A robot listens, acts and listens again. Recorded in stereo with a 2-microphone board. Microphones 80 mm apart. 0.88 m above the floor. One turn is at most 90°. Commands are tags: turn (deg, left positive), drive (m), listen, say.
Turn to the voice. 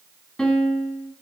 <listen/>
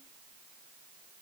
<listen/>
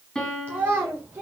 <turn deg="-30"/>
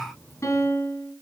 <listen/>
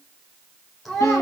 <say>Facing the child speaking, 2 to 4 m away.</say>